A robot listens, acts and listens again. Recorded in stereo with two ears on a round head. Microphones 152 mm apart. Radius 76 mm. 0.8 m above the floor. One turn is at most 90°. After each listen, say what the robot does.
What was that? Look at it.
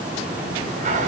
Turn 45° right.
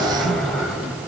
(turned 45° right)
Found it: a sliding door, straight ahead.